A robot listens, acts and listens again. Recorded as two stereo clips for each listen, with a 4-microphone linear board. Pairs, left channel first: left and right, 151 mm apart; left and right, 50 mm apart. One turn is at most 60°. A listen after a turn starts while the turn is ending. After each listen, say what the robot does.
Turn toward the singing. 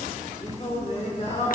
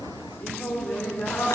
Turn 50° left.
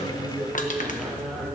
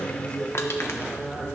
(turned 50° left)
Facing the singing.